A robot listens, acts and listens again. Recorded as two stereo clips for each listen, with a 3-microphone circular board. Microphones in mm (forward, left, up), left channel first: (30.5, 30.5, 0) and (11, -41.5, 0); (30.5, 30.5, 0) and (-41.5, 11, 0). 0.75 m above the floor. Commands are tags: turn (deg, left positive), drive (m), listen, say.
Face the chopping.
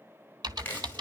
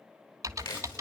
<turn deg="10"/>
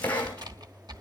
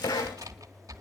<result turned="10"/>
<say>Found it: chopping, straight ahead.</say>